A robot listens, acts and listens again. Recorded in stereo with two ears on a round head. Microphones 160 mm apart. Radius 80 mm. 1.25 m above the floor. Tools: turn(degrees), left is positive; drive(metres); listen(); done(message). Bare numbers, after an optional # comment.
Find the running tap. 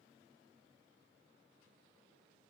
listen()
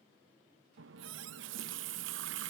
turn(-90)
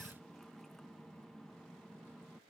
done("Found it: a running tap, straight ahead.")